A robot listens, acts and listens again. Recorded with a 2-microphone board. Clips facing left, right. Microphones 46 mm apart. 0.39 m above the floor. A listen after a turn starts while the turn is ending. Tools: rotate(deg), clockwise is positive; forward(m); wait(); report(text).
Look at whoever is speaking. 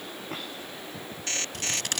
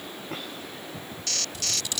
wait()
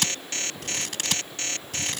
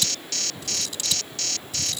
wait()
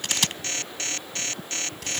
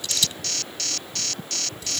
report("I can't make out anyone speaking to turn to.")